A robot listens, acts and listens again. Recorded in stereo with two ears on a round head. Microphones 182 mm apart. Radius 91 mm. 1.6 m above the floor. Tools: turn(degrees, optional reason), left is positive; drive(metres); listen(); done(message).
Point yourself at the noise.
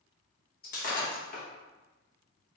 turn(degrees=45, reason="The breaking glass: about 45° left or 135° left.")
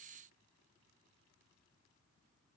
listen()
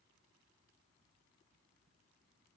done("I heard breaking glass, but can't make it out now. It was about straight ahead or 90° left.")